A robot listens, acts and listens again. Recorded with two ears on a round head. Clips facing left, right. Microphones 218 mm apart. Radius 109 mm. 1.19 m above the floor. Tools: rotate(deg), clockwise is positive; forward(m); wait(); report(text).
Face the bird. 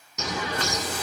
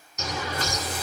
rotate(-60)
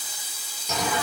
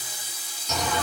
report("Found it: a bird, straight ahead.")